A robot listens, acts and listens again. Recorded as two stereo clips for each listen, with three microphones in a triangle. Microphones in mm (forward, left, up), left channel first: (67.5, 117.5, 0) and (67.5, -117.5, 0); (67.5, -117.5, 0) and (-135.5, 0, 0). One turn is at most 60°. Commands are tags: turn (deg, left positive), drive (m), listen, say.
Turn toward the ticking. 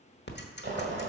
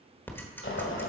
<turn deg="50"/>
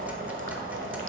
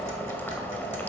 <listen/>
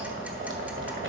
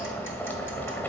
<listen/>
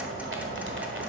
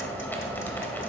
<say>I heard ticking from this way, but can't make it out now.</say>